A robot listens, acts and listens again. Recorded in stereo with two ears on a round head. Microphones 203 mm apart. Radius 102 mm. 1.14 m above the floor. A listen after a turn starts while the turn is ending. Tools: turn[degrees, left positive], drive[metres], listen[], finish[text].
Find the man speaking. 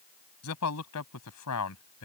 Action: turn[90]
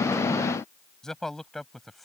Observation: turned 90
Action: finish[Facing the man speaking.]